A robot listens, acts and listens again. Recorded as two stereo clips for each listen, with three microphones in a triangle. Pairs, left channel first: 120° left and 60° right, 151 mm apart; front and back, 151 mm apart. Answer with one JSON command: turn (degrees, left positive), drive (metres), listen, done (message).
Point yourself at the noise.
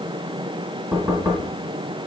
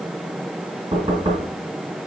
{"turn": -125}
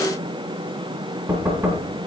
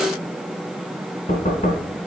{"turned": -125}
{"turn": 20}
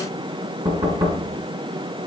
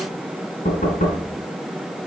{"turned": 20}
{"done": "Found it: knocking, straight ahead, 2 to 4 m away."}